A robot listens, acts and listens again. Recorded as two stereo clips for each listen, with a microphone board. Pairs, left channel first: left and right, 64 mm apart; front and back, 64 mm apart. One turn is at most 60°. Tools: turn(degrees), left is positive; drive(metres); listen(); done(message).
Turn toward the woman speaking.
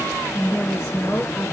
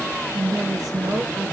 turn(degrees=60)
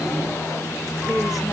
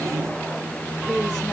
turn(degrees=60)
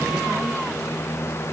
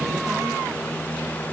turn(degrees=30)
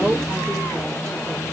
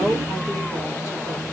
turn(degrees=15)
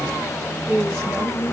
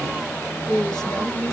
done("Found it: a woman speaking, straight ahead, over 4 m away.")